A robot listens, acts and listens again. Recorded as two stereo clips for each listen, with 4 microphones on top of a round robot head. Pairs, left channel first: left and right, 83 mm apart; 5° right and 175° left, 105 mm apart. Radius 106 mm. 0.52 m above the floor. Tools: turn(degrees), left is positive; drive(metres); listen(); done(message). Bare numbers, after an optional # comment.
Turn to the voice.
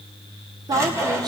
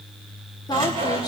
# The woman speaking: 55° right.
turn(-55)
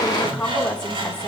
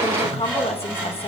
# The woman speaking is now 10° left.
turn(10)
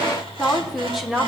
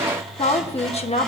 done("Facing the woman speaking, 1 to 2 m away.")